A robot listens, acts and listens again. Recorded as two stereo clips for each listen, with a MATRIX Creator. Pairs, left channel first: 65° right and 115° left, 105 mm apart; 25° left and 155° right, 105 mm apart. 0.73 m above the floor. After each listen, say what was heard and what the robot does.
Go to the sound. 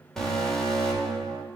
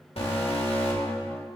The alarm: 15° left. Turn 15° left.
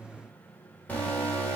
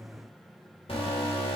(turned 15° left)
Drive 1.0 m forward.
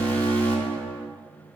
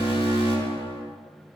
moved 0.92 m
Drive 1.0 m forward.
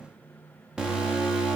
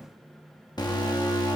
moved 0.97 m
The alarm is now 35° left. Turn 35° left.
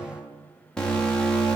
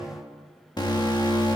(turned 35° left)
The alarm is now 10° left. Turn 10° left.
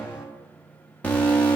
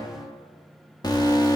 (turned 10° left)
Drive 1.0 m forward.
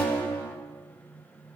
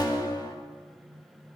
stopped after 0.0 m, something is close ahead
Arrived at the alarm, straight ahead.